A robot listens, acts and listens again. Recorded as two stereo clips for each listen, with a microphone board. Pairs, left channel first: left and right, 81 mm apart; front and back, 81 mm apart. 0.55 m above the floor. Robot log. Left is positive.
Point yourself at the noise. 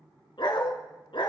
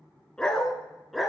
note: The dog barking: 90° left.
cmd yaw +90
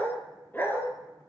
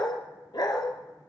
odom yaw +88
note: The dog barking is now 30° left.
cmd yaw +30
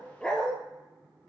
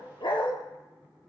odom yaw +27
note: The dog barking is now 15° left.
cmd yaw +15
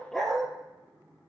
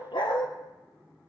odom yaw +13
note: The dog barking is now 10° left.
cmd yaw +10
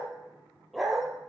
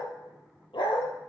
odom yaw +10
end: Facing the dog barking, 2 to 4 m away.